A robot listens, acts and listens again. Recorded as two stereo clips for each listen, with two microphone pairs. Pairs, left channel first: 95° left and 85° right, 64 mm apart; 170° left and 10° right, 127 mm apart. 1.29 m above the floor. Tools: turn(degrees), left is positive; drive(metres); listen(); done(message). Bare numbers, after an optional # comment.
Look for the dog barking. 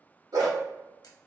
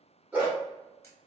# The dog barking: 80° right.
turn(-80)
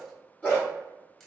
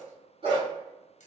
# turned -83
# The dog barking is now 30° left.
turn(30)
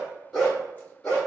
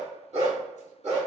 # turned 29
# The dog barking is now 20° left.
turn(20)
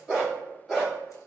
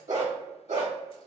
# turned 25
done("Found it: a dog barking, straight ahead, 2 to 4 m away.")